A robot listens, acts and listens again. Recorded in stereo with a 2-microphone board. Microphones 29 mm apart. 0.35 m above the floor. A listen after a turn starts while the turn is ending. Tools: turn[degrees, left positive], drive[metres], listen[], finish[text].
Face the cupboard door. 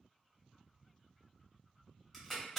Action: listen[]
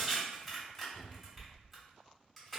Thought: The cupboard door: about 45° left or 135° left.
Action: turn[45]
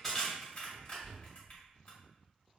Thought: So it is at 10° left.
Action: turn[10]
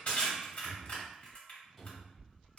Action: finish[Facing the cupboard door.]